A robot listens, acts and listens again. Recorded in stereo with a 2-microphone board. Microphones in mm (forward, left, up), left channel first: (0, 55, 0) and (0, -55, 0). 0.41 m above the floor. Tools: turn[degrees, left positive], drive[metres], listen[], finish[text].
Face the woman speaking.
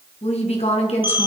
Thought: The woman speaking: about 65° left or 115° left.
Action: turn[65]
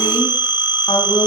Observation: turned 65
Thought: So it is at 50° left.
Action: turn[50]
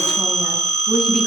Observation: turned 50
Action: finish[Facing the woman speaking.]